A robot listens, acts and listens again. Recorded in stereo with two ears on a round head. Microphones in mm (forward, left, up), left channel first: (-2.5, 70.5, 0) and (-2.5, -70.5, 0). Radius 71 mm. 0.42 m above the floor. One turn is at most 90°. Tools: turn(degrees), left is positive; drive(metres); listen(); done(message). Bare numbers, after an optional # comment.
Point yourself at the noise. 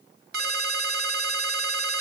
# The ringtone: about 65° right or 115° right.
turn(-65)
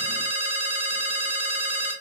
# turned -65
# So it is at 40° right.
turn(-40)
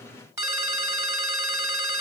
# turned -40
# The ringtone is now 15° right.
turn(-15)
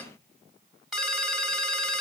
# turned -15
done("Found it: a ringtone, straight ahead.")